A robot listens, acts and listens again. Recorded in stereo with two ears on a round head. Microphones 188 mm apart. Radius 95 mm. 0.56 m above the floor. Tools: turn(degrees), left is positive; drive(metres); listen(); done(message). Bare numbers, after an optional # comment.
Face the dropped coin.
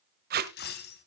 # The dropped coin: about 50° left or 130° left.
turn(50)
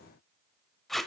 listen()
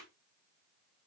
done("I heard a dropped coin, but can't make it out now. It was about straight ahead or 80° left.")